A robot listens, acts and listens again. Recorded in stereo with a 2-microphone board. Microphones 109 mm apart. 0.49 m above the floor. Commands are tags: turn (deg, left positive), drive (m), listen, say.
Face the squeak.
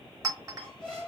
<turn deg="30"/>
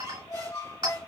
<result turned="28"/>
<turn deg="140"/>
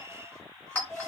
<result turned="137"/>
<say>Facing the squeak.</say>